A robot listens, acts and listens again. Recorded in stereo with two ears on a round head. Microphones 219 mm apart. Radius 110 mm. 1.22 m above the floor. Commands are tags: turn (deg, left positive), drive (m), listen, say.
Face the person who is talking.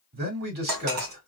<turn deg="-40"/>
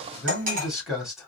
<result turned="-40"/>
<say>Found it: a man speaking, straight ahead, 2 to 4 m away.</say>